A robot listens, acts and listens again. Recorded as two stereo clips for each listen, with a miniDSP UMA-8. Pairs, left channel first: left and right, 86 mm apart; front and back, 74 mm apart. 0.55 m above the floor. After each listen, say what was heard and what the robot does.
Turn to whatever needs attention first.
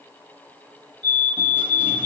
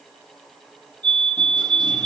The fire alarm: 75° right. Turn 75° right.
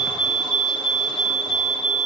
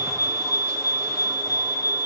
Found it: a fire alarm, straight ahead, 2 to 4 m away.